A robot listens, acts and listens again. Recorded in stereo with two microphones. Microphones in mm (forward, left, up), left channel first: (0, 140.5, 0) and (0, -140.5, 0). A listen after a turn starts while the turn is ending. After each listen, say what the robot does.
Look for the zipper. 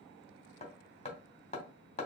Keep listening.
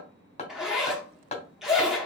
Turn 30° left.
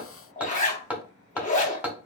Turn 155° left.
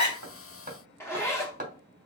Turn 10° left.
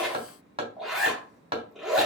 Found it: a zipper, straight ahead.